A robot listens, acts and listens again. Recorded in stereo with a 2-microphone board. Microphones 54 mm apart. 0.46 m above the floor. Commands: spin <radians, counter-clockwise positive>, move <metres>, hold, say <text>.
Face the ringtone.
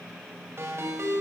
spin -0.96
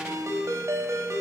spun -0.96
spin -1.22
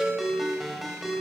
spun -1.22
say Facing the ringtone.